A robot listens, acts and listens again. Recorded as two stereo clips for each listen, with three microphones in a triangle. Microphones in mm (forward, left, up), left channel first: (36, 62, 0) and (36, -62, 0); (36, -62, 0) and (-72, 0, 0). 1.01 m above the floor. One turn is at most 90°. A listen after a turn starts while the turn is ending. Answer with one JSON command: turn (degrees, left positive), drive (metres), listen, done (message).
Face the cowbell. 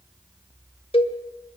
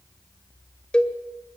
{"turn": 50}
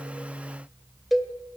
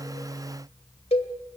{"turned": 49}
{"done": "Found it: a cowbell, straight ahead, 1 to 2 m away."}